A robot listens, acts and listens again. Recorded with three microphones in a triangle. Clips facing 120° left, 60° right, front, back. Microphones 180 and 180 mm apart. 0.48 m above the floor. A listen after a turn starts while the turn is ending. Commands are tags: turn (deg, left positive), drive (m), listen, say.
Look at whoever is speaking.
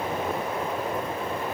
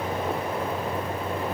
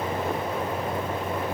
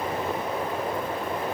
<listen/>
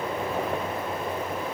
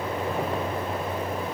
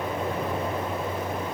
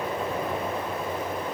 <listen/>
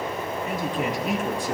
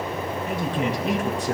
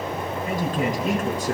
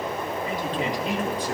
<turn deg="-45"/>
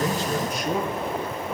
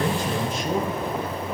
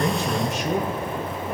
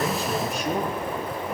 <say>Found it: a man speaking, straight ahead, over 4 m away.</say>